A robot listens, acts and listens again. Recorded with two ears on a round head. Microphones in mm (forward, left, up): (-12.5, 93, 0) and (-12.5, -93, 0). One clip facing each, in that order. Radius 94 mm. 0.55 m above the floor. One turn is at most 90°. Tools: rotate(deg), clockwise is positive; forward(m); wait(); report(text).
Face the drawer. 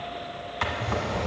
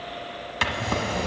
rotate(40)
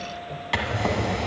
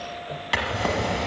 report("Facing the drawer, 1 to 2 m away.")